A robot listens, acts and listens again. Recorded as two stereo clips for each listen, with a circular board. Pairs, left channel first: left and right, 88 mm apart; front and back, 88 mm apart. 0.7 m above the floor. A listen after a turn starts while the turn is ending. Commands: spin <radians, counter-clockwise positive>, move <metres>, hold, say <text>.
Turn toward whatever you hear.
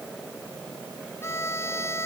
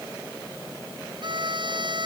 spin 2.62
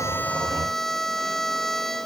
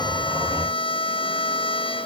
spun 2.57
say Found it: a violin, straight ahead.